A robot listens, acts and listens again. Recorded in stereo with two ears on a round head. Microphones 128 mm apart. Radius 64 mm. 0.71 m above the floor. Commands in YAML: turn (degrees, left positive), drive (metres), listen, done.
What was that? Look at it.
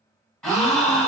turn: 30
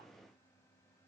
listen: true
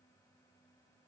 done: "I heard a gasp, but can't make it out now. It was about 25° right or 145° left."